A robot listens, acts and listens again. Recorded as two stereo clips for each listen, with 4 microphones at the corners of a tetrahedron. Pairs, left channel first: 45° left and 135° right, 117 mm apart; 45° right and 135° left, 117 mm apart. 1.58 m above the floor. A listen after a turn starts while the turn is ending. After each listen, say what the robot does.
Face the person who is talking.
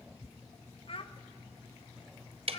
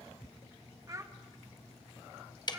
Turn 75° left.
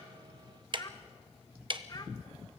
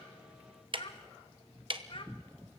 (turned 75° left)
Facing the child speaking.